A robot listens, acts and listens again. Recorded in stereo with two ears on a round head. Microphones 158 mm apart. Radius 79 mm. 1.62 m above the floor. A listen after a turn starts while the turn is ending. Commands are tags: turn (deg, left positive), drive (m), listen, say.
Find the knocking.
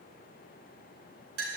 <listen/>
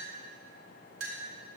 <listen/>
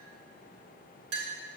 <say>I can't make out knocking to turn to.</say>